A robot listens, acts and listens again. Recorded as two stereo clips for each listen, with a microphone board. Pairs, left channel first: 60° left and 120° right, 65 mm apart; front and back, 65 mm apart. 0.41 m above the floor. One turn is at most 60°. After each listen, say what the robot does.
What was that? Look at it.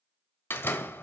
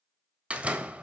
Turn 60° left.
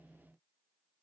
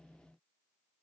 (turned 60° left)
Turn 50° left.
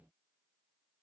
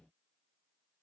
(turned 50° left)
I heard a door slam from this way, but can't make it out now.